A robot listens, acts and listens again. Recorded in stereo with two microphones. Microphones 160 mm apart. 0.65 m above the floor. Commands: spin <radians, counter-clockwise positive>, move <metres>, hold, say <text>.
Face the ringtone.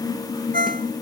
spin -1.05
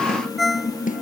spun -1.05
say Found it: a ringtone, straight ahead.